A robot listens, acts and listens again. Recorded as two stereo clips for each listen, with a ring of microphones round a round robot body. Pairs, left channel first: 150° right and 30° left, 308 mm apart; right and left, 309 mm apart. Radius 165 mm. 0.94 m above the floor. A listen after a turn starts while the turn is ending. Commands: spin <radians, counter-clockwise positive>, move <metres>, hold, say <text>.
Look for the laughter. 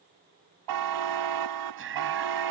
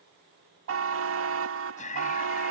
spin -0.44
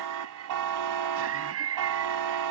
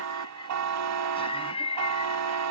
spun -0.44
spin -0.26
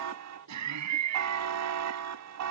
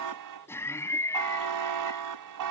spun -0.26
spin -0.17
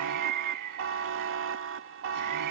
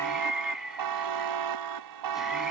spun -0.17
say Facing the laughter.